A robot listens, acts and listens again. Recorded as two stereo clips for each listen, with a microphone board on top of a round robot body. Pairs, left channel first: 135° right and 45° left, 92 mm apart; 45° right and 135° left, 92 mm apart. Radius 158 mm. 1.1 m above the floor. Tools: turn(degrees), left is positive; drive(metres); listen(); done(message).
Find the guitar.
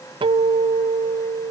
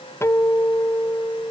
turn(degrees=15)
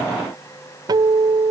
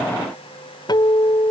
done("Found it: a guitar, straight ahead.")